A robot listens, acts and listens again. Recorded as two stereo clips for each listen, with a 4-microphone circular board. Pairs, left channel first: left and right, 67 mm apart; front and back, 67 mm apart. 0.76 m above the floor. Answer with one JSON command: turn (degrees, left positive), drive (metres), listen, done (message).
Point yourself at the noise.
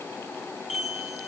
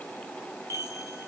{"turn": -175}
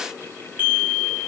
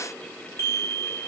{"turn": -35}
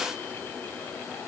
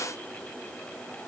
{"listen": true}
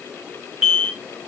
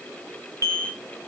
{"turn": -15}
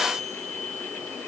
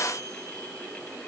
{"listen": true}
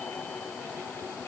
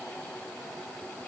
{"listen": true}
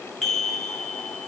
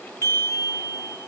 {"done": "Facing the chime."}